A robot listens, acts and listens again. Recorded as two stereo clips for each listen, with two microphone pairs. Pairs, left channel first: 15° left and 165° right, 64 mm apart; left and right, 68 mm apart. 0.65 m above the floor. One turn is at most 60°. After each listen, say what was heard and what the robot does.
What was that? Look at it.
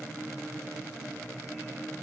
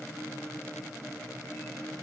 Keep listening.
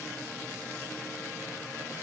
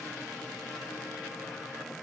Keep listening.
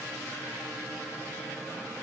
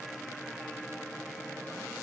I can't make out anything.